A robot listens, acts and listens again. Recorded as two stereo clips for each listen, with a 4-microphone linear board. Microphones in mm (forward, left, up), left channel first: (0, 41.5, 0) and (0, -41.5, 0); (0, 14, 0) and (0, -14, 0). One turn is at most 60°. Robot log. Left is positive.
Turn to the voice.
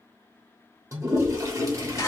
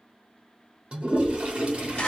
note: The child speaking: about 55° right or 125° right.
cmd yaw -55
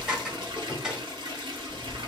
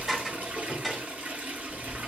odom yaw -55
note: So it is at 10° right.
cmd yaw -10
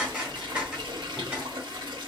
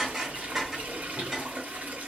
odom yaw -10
end: Found it: a child speaking, straight ahead, 1 to 2 m away.